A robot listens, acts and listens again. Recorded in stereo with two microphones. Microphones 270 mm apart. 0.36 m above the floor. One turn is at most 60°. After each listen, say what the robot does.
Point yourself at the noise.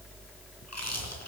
Turn 60° left.
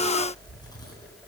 Turn 15° left.
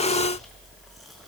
Keep listening.
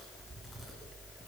Keep listening.
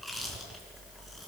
Found it: chewing, straight ahead.